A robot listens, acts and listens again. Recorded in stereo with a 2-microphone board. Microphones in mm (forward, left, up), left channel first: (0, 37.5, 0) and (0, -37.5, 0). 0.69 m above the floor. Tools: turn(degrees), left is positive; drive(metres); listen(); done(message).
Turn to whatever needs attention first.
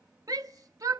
turn(degrees=-55)
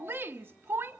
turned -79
turn(degrees=-35)
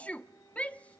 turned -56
turn(degrees=20)
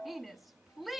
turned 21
done("Found it: a shout, straight ahead.")